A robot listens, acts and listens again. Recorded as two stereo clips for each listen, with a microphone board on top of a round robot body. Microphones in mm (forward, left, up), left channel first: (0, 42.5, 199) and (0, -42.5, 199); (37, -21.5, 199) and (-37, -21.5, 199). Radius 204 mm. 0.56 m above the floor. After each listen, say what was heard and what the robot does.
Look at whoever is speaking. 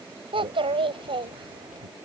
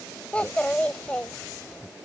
The child speaking: 75° right. Turn 75° right.
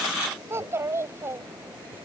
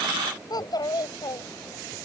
The child speaking is now 30° right. Turn 30° right.
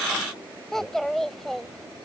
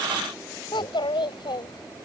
Found it: a child speaking, straight ahead.